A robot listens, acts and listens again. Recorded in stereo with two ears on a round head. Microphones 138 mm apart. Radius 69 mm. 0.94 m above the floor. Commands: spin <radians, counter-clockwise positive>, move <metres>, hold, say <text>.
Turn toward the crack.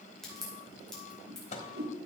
spin 0.52
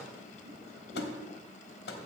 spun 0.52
hold
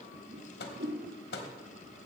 say I heard a crack, but can't make it out now. It was about 25° right or 145° left.